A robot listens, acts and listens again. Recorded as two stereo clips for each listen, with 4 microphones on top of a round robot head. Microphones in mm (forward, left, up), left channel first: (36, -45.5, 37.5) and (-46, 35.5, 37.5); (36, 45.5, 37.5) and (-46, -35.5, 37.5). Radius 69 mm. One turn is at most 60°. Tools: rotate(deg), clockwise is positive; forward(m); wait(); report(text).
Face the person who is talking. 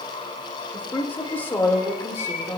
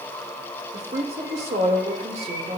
rotate(60)
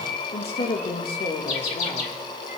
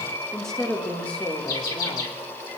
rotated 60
rotate(25)
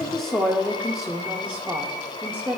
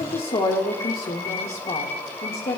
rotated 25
rotate(-60)
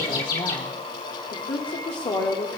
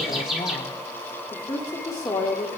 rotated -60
report("Found it: a woman speaking, straight ahead.")